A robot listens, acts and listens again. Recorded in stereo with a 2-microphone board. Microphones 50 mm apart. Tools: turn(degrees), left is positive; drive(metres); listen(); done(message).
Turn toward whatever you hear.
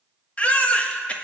turn(degrees=25)
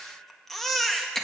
done("Found it: a baby crying, straight ahead.")